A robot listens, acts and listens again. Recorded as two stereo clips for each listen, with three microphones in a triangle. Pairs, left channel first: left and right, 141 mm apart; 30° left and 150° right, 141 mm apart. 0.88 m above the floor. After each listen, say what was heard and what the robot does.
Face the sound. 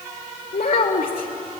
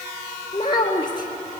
The child speaking: 90° left. Turn 90° left.
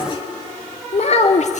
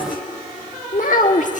The child speaking is now 60° left. Turn 60° left.
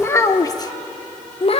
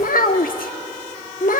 The child speaking is now 45° left. Turn 45° left.
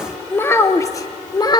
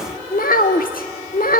The child speaking is now 30° left. Turn 30° left.
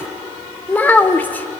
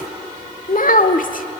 The child speaking is now 10° left. Turn 10° left.
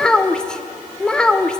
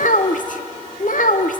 Facing the child speaking, 1 to 2 m away.